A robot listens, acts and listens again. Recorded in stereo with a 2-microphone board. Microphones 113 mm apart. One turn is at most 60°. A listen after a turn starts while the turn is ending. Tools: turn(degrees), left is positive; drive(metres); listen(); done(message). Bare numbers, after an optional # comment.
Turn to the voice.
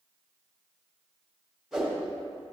listen()
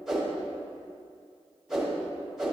listen()
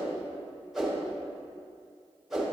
done("I can't make out anyone speaking to turn to.")